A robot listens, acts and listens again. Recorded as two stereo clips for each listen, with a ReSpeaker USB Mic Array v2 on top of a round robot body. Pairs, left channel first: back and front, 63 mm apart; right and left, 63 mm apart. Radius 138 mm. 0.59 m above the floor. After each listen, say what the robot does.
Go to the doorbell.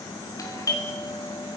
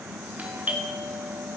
Turn 155° left.
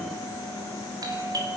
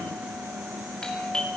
Turn 10° right.
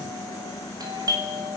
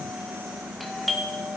Drive 1.0 m forward.
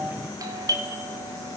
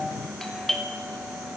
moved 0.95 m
Drive 1.0 m forward.
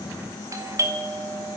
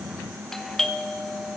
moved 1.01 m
Turn 10° right.
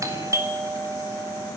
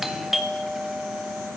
Drive 1.0 m forward.
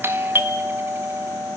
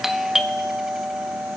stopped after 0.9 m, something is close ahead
Turn 10° left.
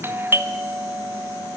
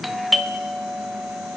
I am next to the doorbell.